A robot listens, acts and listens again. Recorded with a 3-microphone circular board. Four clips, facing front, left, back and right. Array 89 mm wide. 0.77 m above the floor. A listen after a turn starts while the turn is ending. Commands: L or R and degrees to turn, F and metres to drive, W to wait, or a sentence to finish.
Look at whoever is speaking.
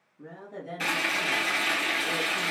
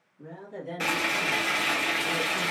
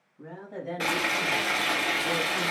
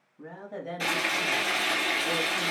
R125
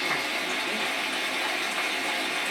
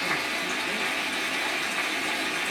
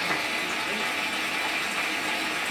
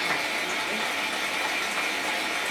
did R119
W
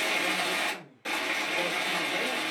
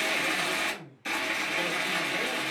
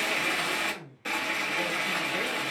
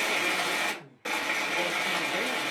R70
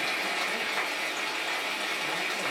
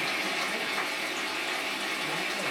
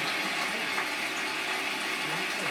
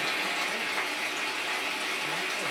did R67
W
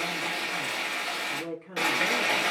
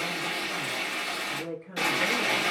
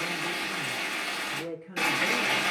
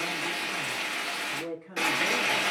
R10
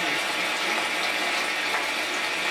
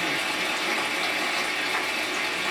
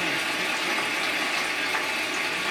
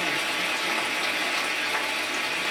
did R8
W
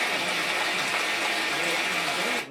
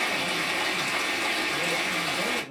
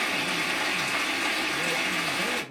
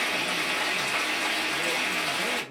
W
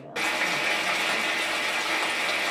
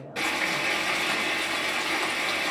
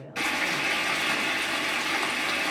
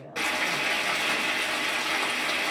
Found it: a woman speaking, straight ahead, 2 to 4 m away.